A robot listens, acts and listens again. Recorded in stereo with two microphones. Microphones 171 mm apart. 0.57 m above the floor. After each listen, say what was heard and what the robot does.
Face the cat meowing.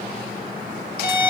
Keep listening.
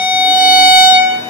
Keep listening.
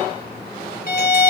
I can't make out a cat meowing to turn to.